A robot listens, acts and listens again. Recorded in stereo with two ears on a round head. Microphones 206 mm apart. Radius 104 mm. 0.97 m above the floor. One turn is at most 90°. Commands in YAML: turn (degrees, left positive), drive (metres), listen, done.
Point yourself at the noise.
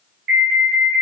turn: -45
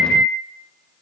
done: "Found it: an alarm, straight ahead."